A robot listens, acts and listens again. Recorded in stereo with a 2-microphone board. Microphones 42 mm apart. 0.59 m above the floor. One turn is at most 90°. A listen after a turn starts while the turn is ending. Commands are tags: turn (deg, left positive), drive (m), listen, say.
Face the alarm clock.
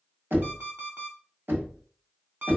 <turn deg="-45"/>
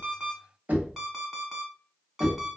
<say>Facing the alarm clock, 2 to 4 m away.</say>